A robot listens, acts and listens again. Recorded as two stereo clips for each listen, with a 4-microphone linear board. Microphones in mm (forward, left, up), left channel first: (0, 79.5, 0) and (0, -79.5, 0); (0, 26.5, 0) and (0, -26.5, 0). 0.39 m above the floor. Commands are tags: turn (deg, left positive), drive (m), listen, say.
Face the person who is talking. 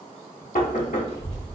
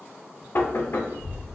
<turn deg="-45"/>
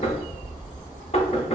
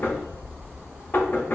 <turn deg="-80"/>
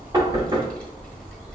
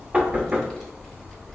<say>Found it: a child speaking, straight ahead.</say>